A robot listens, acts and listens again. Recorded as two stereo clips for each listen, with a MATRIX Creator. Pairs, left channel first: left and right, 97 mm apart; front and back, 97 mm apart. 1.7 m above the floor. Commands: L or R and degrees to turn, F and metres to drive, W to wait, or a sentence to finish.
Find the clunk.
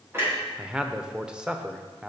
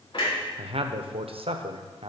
R25
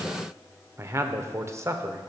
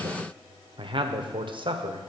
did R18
R10
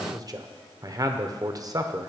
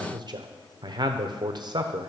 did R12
Facing where the clunk came from. I can't hear it now.